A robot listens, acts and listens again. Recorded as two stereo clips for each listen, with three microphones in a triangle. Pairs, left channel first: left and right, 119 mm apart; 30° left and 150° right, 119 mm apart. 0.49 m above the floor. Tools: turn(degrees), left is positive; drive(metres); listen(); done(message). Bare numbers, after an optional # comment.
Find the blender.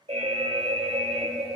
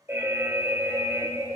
listen()
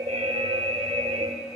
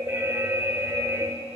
listen()
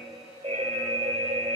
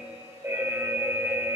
done("I can't make out a blender to turn to.")